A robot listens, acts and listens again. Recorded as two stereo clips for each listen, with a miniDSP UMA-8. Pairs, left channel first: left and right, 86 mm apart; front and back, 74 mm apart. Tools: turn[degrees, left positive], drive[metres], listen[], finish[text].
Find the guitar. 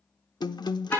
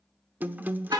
Thought: The guitar: 115° left.
Action: turn[115]
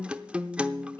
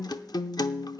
Thought: The guitar is now 15° right.
Action: turn[-15]
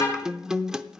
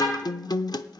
Thought: The guitar is now 10° right.
Action: turn[-10]
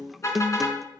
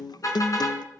Action: finish[Facing the guitar.]